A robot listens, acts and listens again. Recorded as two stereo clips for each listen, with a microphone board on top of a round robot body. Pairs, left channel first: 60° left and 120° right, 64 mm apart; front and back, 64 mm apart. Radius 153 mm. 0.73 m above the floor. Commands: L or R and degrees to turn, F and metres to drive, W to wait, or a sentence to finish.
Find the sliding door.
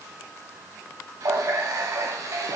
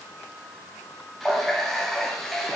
W
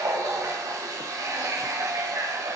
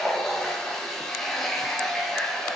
W
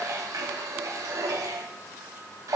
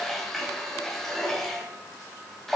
I can't make out a sliding door to turn to.